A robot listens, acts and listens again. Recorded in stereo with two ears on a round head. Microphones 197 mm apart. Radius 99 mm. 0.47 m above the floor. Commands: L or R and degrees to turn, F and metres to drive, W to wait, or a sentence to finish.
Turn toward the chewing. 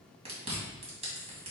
R30
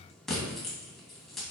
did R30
Facing the chewing, 2 to 4 m away.